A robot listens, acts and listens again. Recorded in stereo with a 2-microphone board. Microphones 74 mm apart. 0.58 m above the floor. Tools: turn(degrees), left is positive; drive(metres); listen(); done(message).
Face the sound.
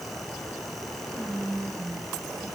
turn(degrees=-70)
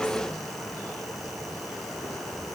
listen()
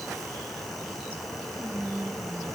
turn(degrees=-30)
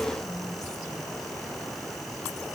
listen()
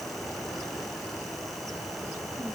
listen()
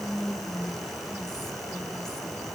done("Found it: whispering, straight ahead.")